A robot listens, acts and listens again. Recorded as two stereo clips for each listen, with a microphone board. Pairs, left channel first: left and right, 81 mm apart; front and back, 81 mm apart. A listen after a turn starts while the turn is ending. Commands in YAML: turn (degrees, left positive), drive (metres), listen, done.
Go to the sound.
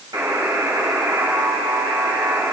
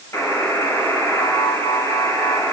turn: -50
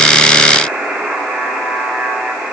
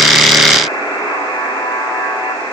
drive: 1.0
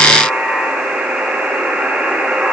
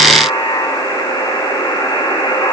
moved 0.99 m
turn: -10
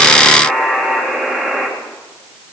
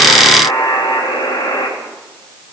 drive: 1.0
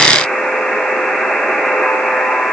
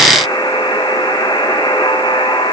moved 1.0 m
drive: 1.0
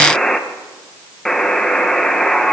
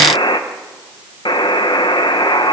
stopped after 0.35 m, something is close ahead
done: "I am next to the buzzer."